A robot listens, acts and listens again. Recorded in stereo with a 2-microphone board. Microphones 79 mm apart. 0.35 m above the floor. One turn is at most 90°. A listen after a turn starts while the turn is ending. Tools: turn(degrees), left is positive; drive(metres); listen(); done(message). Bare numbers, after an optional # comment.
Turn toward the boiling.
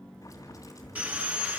# The boiling: about 45° left or 135° left.
turn(45)
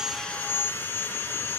listen()
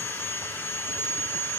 listen()
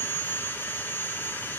done("I heard boiling, but can't make it out now. It was about straight ahead or 90° left.")